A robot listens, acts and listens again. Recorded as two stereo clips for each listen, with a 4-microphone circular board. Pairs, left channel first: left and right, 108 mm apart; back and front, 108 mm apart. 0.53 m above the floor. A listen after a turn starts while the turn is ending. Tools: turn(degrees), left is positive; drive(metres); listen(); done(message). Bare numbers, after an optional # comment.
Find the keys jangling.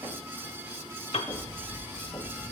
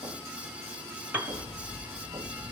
# The keys jangling: 100° right.
turn(-100)
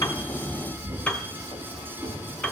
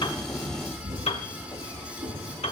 done("Found it: keys jangling, straight ahead.")